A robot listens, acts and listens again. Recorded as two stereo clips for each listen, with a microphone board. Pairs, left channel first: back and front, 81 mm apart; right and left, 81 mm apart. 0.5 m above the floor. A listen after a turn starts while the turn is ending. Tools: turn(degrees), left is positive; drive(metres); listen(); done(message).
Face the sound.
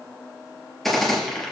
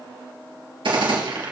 turn(degrees=90)
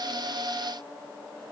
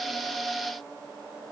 done("Facing where the gunshot came from. I can't hear it now.")